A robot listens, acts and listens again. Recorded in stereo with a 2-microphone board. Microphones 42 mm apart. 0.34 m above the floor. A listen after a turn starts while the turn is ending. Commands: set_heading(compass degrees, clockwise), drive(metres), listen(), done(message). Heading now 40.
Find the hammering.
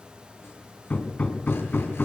set_heading(5)
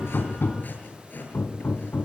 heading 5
set_heading(260)
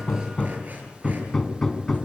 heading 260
set_heading(250)
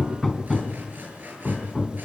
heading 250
done("Facing the hammering.")